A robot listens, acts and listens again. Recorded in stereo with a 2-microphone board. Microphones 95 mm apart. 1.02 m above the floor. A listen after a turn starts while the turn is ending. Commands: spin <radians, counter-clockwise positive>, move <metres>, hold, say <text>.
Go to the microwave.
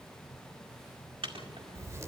spin -1.22
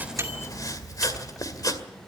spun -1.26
hold
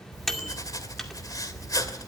move 1.0
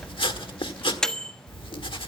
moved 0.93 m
move 1.0
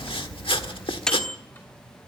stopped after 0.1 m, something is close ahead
say I am next to the microwave.